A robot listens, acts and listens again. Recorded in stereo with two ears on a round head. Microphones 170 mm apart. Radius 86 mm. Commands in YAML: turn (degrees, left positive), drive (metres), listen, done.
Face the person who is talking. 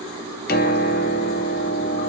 listen: true
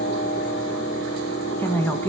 turn: 30
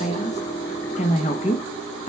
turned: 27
turn: 140
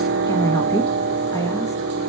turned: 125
turn: 15
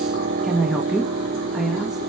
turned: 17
done: "Facing the woman speaking."